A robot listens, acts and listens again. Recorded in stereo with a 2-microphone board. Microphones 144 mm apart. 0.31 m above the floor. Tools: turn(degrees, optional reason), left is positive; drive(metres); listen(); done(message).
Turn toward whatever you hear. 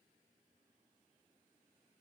listen()
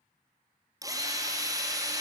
turn(degrees=-25, reason="The drill: about 25° right or 155° right.")
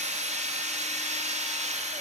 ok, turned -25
turn(degrees=-130, reason="So it is at 130° right.")
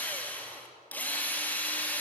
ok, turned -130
turn(degrees=10, reason="The drill is now 10° left.")
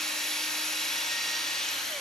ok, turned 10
done("Found it: a drill, straight ahead, 2 to 4 m away.")